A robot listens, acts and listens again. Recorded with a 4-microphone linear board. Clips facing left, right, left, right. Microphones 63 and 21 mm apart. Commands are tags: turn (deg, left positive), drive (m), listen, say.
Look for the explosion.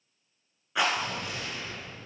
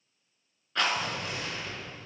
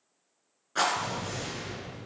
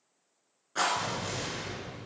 <turn deg="-50"/>
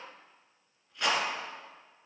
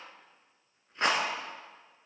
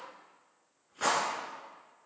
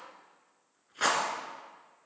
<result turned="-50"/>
<listen/>
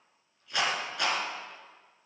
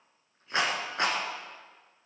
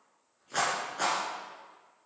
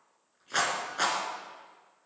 <say>I heard an explosion, but can't make it out now. It was about straight ahead or 80° right.</say>